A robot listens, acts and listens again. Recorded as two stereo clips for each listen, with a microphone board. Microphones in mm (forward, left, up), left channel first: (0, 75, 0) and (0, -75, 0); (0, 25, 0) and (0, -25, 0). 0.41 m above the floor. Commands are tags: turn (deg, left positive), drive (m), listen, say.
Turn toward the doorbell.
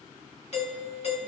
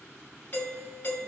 <turn deg="45"/>
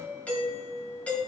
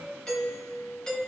<turn deg="10"/>
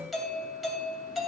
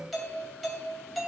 <say>Facing the doorbell, 2 to 4 m away.</say>